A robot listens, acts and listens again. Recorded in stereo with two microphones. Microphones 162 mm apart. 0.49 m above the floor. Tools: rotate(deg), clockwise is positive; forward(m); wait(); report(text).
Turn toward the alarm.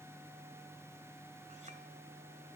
wait()
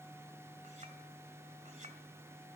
wait()
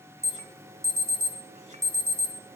rotate(15)
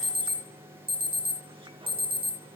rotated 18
rotate(150)
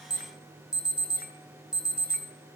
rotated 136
report("Found it: an alarm, straight ahead, 1 to 2 m away.")